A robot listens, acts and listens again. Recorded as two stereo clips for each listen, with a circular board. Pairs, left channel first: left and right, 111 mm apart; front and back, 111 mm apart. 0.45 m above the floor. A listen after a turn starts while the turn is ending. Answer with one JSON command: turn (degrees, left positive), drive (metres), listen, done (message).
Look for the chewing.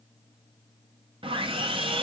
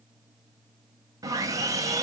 {"listen": true}
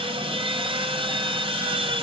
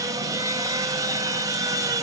{"listen": true}
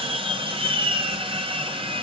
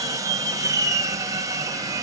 {"done": "I can't make out chewing to turn to."}